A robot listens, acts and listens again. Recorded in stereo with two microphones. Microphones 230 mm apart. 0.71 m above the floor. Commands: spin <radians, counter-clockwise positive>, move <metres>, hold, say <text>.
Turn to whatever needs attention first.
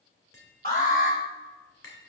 spin 0.70
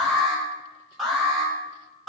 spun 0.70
say Facing the alarm, over 4 m away.